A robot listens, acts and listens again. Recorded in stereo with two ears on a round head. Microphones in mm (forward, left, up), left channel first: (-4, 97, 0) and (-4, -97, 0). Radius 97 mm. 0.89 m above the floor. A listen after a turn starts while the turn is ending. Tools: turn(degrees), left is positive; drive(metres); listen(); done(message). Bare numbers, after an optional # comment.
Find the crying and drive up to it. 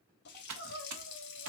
# The crying: about 30° right or 150° right.
turn(-30)
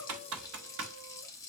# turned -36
listen()
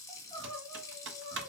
# So it is at 10° left.
turn(10)
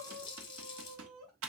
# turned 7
drive(1.0)
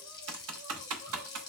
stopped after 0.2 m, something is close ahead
listen()
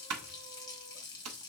listen()
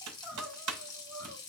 done("Something is in my way. I am facing the crying but have not reached it.")